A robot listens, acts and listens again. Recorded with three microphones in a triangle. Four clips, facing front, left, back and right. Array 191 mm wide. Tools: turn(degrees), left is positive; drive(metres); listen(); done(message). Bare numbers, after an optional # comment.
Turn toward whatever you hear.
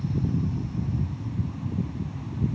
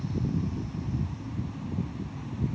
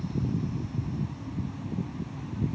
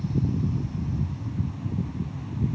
listen()
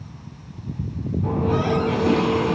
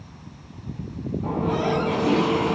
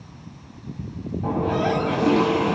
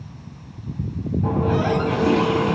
# The running tap: 170° right.
turn(-170)
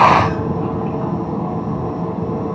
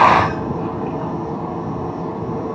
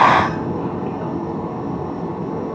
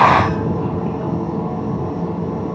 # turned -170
done("Found it: a running tap, straight ahead, 2 to 4 m away.")